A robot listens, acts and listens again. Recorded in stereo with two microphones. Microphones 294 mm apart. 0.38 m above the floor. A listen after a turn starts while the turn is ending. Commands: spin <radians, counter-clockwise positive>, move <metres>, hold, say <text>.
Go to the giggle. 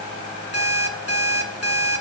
hold
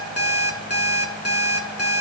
hold
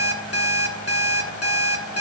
say I can't make out a giggle, only an alarm clock.